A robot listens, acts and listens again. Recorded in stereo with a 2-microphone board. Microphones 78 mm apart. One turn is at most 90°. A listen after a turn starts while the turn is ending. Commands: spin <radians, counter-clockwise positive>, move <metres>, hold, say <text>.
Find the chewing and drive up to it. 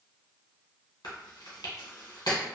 spin 1.13
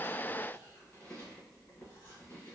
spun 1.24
hold
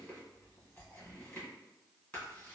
hold
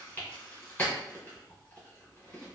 spin 0.44
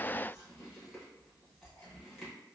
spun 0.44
hold
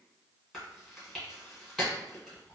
move 1.0
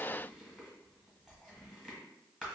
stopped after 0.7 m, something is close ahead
say I am next to the chewing.